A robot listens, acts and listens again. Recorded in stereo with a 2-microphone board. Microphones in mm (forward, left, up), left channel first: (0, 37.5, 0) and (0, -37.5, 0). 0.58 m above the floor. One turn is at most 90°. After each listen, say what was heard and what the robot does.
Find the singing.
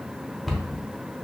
Keep listening.
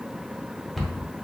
Keep listening.
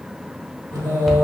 The singing: about 60° right or 120° right. Turn 60° right.
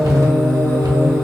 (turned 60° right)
So it is at 50° right. Turn 50° right.
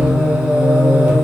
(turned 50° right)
The singing is now 20° right. Turn 20° right.
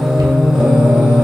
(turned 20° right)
Found it: singing, straight ahead.